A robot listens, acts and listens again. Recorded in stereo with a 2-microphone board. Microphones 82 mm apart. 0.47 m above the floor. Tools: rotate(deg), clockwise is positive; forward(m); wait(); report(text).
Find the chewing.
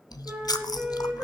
rotate(-55)
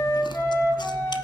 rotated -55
wait()
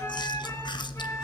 rotate(-70)
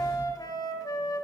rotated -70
wait()
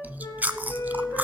rotate(20)
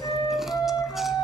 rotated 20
wait()
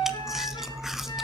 report("Facing the chewing.")